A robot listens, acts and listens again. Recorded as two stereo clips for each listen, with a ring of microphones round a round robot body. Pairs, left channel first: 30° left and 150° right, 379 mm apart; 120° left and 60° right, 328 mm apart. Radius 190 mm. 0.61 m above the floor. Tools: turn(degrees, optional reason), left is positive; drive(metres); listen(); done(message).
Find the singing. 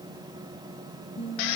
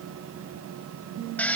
turn(degrees=-45, reason="The singing: 45° right.")
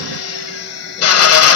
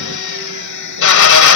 listen()
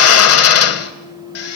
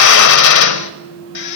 done("Facing the singing, over 4 m away.")